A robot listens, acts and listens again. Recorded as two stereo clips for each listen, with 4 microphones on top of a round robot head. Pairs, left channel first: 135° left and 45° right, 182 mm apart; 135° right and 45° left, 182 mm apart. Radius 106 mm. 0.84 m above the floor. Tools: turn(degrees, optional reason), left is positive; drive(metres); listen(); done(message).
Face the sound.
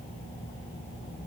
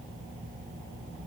listen()
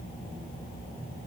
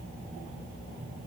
listen()
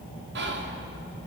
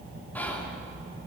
turn(degrees=-55, reason="The whispering: 55° right.")
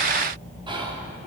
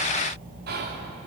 turn(degrees=15, reason="The whispering is now 15° left.")
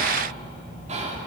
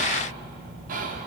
done("Facing the whispering, 2 to 4 m away.")